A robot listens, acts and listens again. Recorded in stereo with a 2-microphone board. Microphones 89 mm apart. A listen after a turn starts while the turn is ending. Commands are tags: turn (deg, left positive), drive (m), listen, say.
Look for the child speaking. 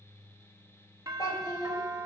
<turn deg="45"/>
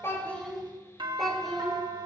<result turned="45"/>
<say>Found it: a child speaking, straight ahead, 2 to 4 m away.</say>